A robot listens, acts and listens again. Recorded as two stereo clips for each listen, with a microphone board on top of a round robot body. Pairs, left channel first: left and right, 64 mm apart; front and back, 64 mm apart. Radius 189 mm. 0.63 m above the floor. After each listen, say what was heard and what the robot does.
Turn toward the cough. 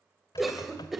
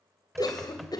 Facing the cough.